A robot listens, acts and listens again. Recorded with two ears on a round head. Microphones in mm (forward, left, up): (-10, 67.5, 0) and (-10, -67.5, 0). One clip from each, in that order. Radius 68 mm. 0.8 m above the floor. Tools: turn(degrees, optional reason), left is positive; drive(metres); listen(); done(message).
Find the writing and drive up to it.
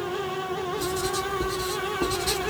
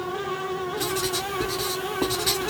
turn(degrees=-60, reason="The writing: about 60° right or 120° right.")
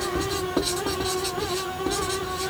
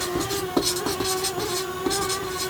turn(degrees=-50, reason="So it is at 50° right.")
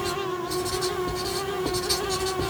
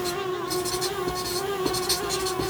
turn(degrees=-25, reason="The writing is now 25° right.")
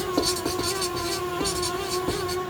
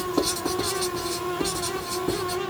drive(metres=1.0)
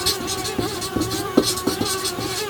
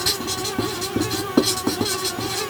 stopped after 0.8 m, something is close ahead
done("Arrived at the writing, straight ahead.")